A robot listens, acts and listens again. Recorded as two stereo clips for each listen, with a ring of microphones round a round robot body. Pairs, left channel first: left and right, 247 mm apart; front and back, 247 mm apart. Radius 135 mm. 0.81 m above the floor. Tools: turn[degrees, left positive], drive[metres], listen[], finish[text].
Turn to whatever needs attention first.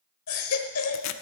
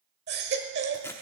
Thought: The baby crying: 125° left.
Action: turn[125]
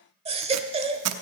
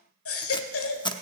Thought: The baby crying is now 25° right.
Action: turn[-25]
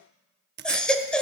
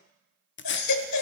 Action: finish[Facing the baby crying, 1 to 2 m away.]